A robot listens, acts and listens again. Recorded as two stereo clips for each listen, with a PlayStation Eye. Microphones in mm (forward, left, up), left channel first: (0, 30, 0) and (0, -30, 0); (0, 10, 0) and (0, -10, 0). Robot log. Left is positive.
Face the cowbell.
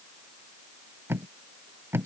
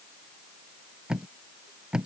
cmd idle
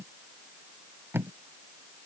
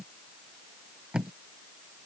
cmd idle
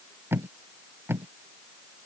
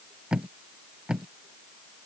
end: I can't make out a cowbell to turn to.